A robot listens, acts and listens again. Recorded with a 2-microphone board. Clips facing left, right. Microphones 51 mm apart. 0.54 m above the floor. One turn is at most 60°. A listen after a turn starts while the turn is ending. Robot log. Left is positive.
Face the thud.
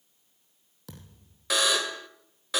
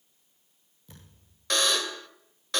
cmd yaw +60
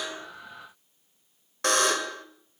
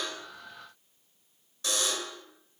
note: Nothing new. It was at 30° left.
cmd yaw +30
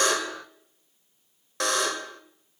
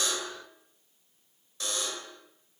end: I heard a thud from this way, but can't make it out now.